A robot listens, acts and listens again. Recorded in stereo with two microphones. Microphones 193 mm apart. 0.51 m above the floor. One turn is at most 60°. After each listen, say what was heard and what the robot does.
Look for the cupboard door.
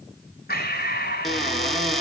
Turn 30° left.
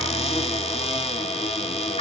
So it is at 150° left. Turn 60° left.
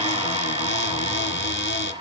The cupboard door is now 85° left. Turn 60° left.
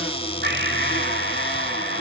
The cupboard door is now 30° left. Turn 30° left.
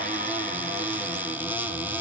The cupboard door is now 10° right. Turn 10° right.
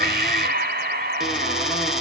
Facing the cupboard door, 1 to 2 m away.